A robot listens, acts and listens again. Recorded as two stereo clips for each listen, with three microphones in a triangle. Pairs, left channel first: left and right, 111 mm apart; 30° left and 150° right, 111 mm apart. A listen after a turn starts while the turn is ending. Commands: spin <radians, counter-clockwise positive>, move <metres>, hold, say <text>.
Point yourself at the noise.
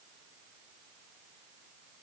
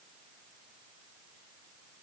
hold
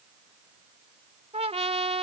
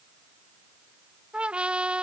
spin -1.22
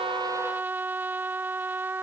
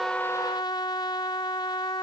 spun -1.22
spin -0.35
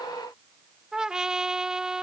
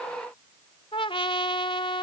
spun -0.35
say Found it: a trumpet, straight ahead.